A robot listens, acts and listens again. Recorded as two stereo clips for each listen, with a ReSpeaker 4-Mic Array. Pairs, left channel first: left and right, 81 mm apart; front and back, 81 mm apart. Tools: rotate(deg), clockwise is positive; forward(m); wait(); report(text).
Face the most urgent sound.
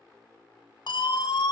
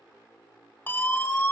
rotate(-65)
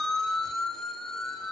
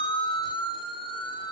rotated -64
report("Found it: a siren, straight ahead.")